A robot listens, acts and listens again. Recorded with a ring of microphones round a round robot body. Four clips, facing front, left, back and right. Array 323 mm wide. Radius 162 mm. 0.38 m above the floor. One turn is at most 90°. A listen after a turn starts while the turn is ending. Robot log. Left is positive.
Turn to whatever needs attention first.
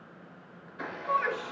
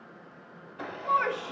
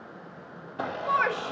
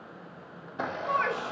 note: The shout: straight behind.
cmd yaw +90
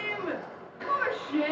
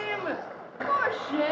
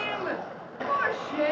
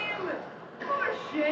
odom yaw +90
note: The shout is now 95° left.
cmd yaw +90
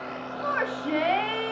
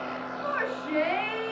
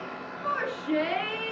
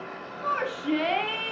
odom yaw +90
note: The shout is now 15° right.
cmd yaw -15
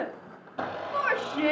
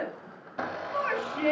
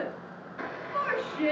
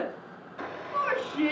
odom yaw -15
end: Facing the shout.